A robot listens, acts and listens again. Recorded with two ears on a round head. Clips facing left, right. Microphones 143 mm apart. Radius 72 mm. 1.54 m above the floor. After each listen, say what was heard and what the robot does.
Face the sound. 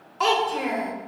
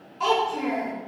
The child speaking: about 65° left or 115° left. Turn 65° left.
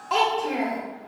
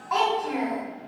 So it is at 35° left. Turn 35° left.
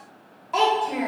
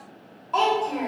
The child speaking is now 10° left. Turn 10° left.
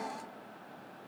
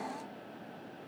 Keep listening.
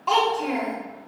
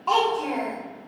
Facing the child speaking, 1 to 2 m away.